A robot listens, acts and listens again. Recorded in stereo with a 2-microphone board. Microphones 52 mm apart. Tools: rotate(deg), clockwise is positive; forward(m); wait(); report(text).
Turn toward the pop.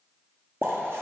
rotate(35)
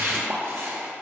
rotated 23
wait()
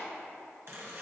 report("I heard a pop, but can't make it out now. It was about 15° right or 120° right.")